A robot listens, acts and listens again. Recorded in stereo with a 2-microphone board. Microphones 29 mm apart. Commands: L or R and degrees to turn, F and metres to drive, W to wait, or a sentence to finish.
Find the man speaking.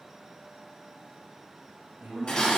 R65
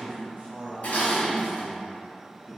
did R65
R15
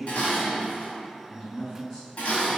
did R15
Facing the man speaking.